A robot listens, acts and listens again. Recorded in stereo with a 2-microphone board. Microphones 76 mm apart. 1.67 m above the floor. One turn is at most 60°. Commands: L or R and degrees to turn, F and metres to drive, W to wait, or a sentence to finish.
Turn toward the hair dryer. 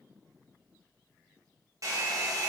R45
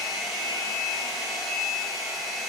Found it: a hair dryer, straight ahead.